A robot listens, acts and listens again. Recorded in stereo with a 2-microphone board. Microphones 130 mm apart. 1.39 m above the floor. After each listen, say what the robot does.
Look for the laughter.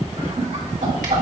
Turn 65° right.
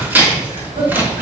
Turn 55° right.
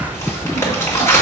Keep listening.
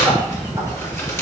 Keep listening.
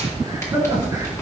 Turn 30° right.
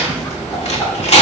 Keep listening.
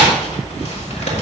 Keep listening.
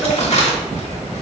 I heard laughter from this way, but can't make it out now.